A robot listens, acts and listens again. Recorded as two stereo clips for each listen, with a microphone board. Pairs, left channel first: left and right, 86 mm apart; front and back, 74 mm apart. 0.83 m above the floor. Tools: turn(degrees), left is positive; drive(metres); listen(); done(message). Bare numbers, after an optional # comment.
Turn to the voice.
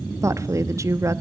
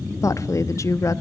# The woman speaking: 40° right.
turn(-40)
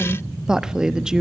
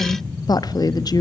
# The woman speaking is now 10° right.
turn(-10)
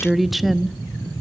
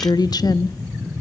done("Found it: a woman speaking, straight ahead, 1 to 2 m away.")